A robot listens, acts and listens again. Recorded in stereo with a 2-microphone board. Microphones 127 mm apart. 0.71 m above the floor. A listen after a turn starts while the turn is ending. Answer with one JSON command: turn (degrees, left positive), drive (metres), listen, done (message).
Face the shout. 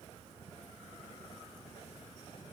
{"listen": true}
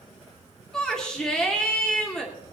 {"turn": 30}
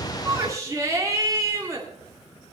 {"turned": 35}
{"turn": -30}
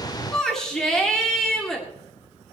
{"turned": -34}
{"done": "Found it: a shout, straight ahead, 2 to 4 m away."}